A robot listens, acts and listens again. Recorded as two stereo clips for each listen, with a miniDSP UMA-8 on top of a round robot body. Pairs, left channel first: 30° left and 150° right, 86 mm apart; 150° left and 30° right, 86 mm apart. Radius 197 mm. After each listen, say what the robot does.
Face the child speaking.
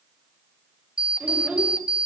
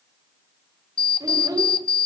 Turn 75° right.
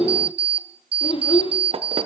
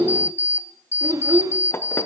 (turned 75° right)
Turn 25° left.
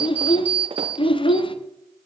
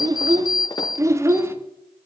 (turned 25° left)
Turn 30° left.
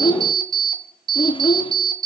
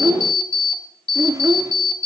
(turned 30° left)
Turn 20° left.
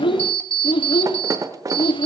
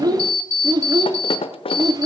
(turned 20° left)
Turn 10° left.
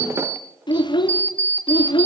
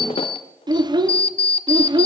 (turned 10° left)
Facing the child speaking.